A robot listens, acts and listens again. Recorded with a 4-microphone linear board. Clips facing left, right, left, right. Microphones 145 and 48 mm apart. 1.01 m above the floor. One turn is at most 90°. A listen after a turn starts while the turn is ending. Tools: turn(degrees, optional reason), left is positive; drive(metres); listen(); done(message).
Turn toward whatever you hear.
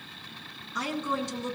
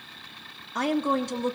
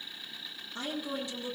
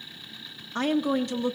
turn(degrees=-55, reason="The woman speaking: about 55° right or 125° right.")
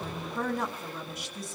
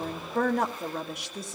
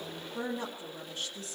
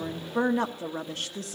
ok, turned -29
turn(degrees=-90, reason="So it is at 90° right.")
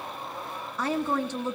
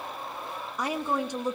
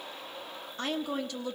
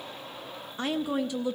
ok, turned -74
turn(degrees=-15, reason="The woman speaking is now 15° right.")
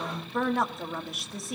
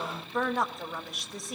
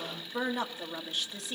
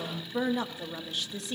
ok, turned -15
done("Facing the woman speaking.")